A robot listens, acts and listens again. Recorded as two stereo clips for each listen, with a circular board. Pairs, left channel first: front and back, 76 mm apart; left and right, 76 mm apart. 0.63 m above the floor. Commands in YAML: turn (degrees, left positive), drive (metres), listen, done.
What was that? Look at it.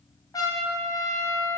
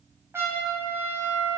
turn: -35
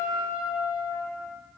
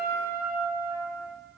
turn: -30
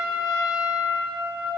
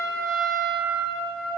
done: "Found it: a trumpet, straight ahead."